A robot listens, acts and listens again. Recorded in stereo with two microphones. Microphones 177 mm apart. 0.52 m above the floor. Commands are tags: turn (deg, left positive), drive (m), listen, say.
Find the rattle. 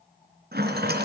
<turn deg="-65"/>
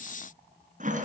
<turn deg="-45"/>
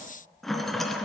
<say>Found it: a rattle, straight ahead.</say>